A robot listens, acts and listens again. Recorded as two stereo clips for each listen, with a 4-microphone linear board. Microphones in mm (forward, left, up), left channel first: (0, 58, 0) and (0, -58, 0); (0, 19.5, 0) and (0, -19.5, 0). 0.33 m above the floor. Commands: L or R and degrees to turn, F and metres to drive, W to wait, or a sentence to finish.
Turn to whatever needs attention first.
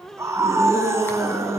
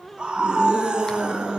R25
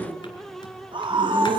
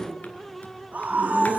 R130
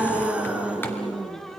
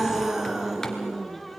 R10
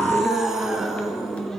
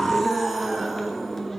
Found it: a scream, straight ahead.